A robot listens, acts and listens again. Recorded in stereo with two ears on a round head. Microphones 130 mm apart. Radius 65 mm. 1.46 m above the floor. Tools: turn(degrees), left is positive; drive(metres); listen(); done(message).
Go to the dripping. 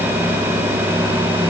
listen()
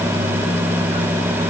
listen()
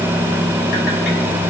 done("I can't make out dripping to turn to.")